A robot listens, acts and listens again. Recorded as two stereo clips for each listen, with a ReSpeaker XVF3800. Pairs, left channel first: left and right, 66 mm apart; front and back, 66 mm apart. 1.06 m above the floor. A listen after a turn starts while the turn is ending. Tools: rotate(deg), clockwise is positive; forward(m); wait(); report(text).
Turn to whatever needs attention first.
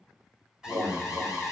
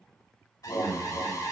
rotate(15)
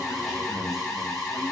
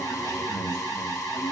report("Found it: an alarm, straight ahead.")